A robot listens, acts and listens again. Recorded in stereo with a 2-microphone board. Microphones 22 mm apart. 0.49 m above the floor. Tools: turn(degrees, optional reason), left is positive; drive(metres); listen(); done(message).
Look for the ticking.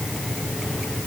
listen()
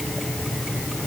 listen()
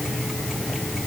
done("I can't make out ticking to turn to.")